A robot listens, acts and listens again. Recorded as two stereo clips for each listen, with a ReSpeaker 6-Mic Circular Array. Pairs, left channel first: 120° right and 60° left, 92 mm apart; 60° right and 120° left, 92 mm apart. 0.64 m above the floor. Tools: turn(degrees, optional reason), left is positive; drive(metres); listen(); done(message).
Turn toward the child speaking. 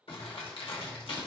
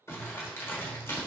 listen()
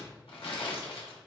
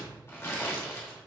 listen()
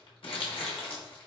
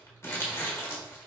done("I can't make out a child speaking to turn to.")